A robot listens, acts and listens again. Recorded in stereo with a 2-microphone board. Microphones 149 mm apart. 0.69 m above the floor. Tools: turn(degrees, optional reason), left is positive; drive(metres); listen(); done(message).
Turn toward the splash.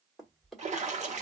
turn(degrees=-50, reason="The splash: about 50° right or 130° right.")
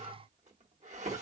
listen()
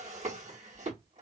done("I heard a splash, but can't make it out now. It was about straight ahead or 80° right.")